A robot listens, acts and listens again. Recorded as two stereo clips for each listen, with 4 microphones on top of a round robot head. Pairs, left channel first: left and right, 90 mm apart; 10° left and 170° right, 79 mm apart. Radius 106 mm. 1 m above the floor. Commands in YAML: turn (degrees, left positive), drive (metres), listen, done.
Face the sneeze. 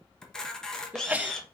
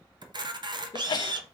turn: -15
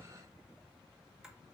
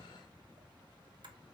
done: "I heard a sneeze from this way, but can't make it out now."